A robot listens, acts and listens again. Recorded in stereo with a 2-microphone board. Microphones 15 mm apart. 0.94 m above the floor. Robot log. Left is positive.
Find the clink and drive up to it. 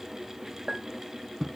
cmd yaw -90
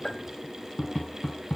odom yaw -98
note: So it is at 20° left.
cmd yaw +20
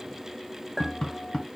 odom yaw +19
cmd fwd 1.0
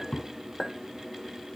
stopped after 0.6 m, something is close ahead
end: Something is in my way. I am facing the clink but have not reached it.